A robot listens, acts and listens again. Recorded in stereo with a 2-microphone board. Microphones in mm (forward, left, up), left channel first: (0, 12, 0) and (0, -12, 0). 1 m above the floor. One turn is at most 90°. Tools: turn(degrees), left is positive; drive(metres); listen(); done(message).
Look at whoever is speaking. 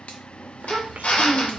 turn(degrees=-90)
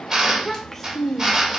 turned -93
turn(degrees=10)
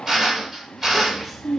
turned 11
done("Facing the child speaking, under 1 m away.")